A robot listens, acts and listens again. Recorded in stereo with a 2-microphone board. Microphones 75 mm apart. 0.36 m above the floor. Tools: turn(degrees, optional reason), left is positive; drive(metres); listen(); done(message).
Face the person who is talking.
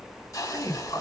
turn(degrees=45, reason="The man speaking: about 45° left or 135° left.")
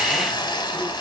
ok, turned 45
listen()
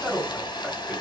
done("Found it: a man speaking, straight ahead.")